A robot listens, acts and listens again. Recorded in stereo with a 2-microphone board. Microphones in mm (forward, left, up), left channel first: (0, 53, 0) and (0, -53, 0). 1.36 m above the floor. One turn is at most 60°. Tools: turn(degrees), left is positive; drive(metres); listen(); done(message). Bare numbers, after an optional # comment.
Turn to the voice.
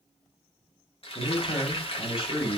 # The man speaking: about 55° left or 125° left.
turn(55)
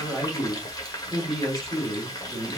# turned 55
done("Found it: a man speaking, straight ahead, 2 to 4 m away.")